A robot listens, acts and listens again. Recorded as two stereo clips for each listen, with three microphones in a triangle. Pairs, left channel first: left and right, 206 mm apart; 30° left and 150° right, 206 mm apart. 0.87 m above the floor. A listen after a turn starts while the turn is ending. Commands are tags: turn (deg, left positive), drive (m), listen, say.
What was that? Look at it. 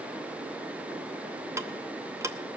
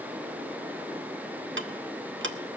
<turn deg="-165"/>
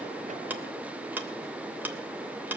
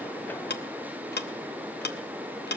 <turn deg="-10"/>
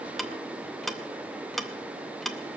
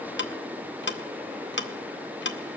<say>Found it: ticking, straight ahead.</say>